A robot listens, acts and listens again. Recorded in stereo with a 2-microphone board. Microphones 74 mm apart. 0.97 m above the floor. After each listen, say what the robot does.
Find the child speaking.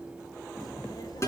Turn 70° left.
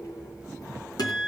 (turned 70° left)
Turn 55° left.
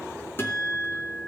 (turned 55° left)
Keep listening.
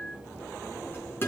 Turn 30° left.
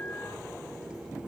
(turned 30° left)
Facing the child speaking.